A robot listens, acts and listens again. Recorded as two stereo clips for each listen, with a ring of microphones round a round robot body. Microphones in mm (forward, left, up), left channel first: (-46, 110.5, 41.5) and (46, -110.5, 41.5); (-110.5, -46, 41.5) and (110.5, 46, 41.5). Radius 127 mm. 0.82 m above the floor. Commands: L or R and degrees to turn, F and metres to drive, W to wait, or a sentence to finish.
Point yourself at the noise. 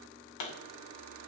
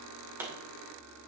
L105
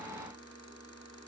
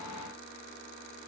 Facing where the pop came from. I can't hear it now.